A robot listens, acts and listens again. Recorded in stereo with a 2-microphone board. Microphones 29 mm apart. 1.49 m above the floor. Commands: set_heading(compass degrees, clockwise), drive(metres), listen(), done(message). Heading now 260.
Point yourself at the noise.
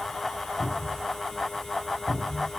set_heading(230)
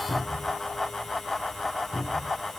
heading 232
set_heading(252)
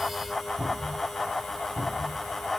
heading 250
done("Found it: a cupboard door, straight ahead.")